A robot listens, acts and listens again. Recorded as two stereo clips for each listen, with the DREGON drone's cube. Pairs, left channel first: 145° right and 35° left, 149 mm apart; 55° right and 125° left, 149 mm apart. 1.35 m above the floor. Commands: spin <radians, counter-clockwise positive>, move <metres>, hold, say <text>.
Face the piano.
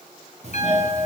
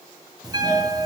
spin -3.05
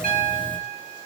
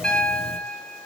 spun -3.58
spin 0.44
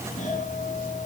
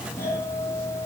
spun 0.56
hold
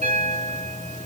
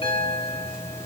say Found it: a piano, straight ahead.